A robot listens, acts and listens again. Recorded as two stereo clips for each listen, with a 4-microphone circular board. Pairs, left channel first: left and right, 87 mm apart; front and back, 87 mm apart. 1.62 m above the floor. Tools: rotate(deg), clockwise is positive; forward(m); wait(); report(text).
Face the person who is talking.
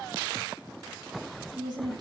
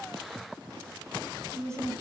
rotate(125)
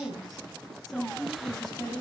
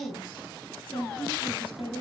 report("Facing the woman speaking.")